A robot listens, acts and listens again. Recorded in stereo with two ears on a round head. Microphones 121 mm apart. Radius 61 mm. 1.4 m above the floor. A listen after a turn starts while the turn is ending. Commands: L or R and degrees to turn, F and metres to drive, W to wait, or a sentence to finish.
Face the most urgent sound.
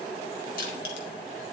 W
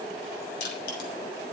W
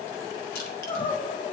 L40
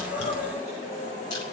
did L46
W
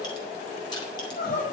L95
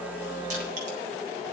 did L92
W
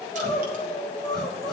Facing the crying.